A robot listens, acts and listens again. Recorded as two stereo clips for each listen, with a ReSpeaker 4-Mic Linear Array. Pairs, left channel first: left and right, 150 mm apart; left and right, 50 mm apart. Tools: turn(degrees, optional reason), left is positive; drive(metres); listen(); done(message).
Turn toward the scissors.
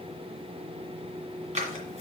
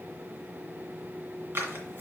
turn(degrees=-50, reason="The scissors: about 50° right or 130° right.")
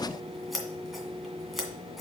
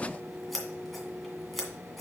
done("Found it: scissors, straight ahead, 2 to 4 m away.")